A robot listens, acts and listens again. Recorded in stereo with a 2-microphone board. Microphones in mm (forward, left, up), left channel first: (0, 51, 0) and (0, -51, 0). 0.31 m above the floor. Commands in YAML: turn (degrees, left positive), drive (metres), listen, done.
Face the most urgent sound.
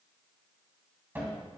listen: true
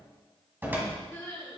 turn: 20
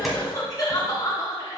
turn: 135
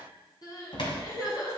turn: 45
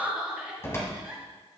turn: -15
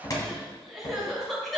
done: "Found it: crying, straight ahead, 2 to 4 m away."